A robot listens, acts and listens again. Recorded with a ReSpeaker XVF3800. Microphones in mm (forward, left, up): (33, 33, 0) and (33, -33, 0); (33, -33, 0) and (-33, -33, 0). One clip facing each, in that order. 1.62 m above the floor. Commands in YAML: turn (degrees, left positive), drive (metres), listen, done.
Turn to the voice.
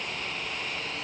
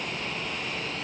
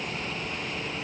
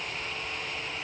listen: true
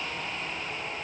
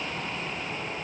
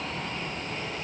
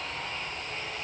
listen: true
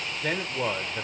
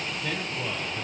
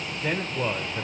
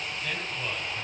turn: 55
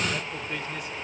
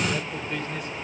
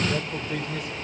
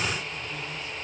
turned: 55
done: "Facing the man speaking, 1 to 2 m away."